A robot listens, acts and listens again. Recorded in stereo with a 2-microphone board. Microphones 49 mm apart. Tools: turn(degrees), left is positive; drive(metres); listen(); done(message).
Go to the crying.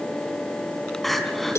turn(degrees=30)
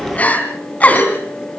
turn(degrees=150)
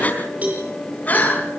turn(degrees=35)
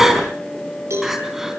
drive(metres=1.0)
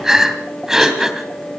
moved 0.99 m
turn(degrees=-10)
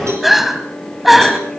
drive(metres=1.0)
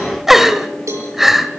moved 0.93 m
drive(metres=1.0)
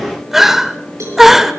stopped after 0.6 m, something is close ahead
turn(degrees=-10)
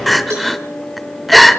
done("I am next to the crying.")